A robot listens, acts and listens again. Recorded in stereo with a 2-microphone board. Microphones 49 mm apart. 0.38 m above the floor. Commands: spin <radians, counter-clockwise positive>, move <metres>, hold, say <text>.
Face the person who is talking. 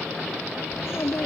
spin 1.05
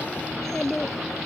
spin 0.17
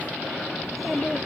say Found it: a child speaking, straight ahead.